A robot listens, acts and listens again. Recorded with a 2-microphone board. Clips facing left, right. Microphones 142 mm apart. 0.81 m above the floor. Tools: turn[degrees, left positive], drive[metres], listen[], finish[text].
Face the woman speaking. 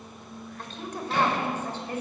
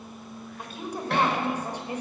Action: turn[-30]
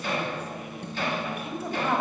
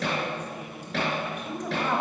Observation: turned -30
Action: finish[Facing the woman speaking.]